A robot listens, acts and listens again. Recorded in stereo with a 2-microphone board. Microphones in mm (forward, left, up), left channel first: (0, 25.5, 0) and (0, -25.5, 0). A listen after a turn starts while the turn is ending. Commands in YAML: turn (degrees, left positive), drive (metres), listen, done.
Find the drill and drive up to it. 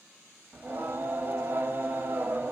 listen: true
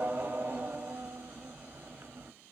listen: true
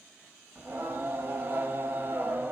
done: "I can't make out a drill to turn to."